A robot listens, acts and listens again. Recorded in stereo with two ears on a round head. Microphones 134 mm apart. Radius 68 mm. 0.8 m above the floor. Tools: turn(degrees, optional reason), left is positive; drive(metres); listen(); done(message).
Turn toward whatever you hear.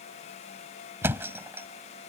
turn(degrees=-15, reason="The thud: about 15° right or 165° right.")
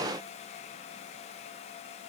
listen()
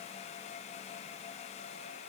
done("I heard a thud, but can't make it out now. It was about straight ahead or 150° right.")